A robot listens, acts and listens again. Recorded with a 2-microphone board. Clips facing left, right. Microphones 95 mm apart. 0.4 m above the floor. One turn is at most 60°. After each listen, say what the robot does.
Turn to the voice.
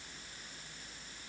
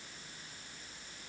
Keep listening.
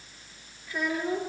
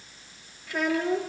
Turn 60° right.
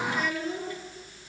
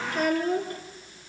Turn 50° right.
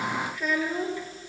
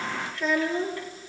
Turn 10° left.
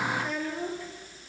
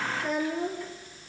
Found it: a child speaking, straight ahead, over 4 m away.